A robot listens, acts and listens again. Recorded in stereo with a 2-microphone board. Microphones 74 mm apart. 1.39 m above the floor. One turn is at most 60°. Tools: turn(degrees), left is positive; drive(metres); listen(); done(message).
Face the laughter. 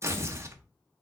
listen()
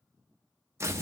listen()
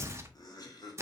turn(degrees=60)
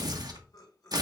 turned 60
turn(degrees=55)
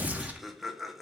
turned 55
done("Found it: laughter, straight ahead, 1 to 2 m away.")